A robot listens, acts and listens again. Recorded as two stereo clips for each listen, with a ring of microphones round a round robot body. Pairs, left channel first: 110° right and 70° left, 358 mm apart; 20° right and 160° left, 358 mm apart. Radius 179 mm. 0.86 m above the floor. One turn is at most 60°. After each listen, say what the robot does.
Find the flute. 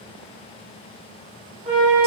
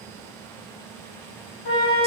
Found it: a flute, straight ahead.